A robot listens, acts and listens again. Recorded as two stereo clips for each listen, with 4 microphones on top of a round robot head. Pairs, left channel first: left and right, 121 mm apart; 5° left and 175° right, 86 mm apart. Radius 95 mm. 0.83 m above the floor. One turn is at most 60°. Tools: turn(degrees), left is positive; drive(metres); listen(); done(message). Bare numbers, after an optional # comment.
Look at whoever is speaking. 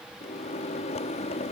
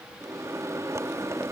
listen()
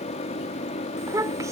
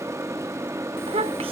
# The child speaking: 160° right.
turn(-60)
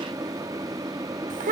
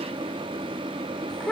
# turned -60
# The child speaking is now 80° right.
turn(-60)
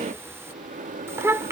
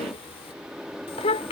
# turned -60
# The child speaking is now 20° right.
turn(-20)
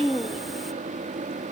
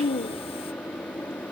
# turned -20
done("Found it: a child speaking, straight ahead.")